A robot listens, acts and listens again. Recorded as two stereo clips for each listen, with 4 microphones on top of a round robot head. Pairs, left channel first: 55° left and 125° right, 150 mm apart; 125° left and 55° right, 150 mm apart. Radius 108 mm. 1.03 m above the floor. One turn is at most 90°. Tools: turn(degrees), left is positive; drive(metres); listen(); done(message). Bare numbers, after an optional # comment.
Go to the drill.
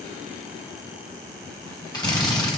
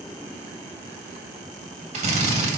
# The drill: 10° right.
turn(-10)
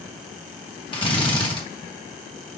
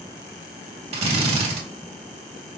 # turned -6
drive(1.0)
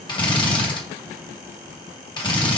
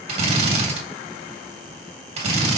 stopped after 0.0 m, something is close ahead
done("Blocked. The drill is further on, straight ahead.")